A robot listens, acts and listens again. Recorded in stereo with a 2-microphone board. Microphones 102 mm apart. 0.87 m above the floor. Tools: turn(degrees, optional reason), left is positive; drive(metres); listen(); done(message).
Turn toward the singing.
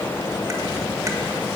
listen()
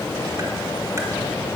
listen()
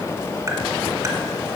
done("I can't make out singing.")